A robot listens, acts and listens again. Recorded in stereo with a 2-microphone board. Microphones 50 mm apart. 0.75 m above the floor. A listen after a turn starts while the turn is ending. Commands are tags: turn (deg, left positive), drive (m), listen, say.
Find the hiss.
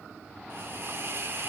<turn deg="-50"/>
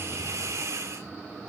<turn deg="-80"/>
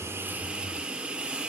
<turn deg="-20"/>
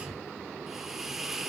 <say>Facing the hiss, 1 to 2 m away.</say>